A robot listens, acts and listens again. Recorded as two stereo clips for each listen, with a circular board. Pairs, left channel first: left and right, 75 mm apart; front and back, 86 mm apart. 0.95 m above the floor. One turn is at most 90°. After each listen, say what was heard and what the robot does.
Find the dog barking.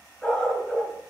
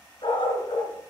Facing the dog barking, 2 to 4 m away.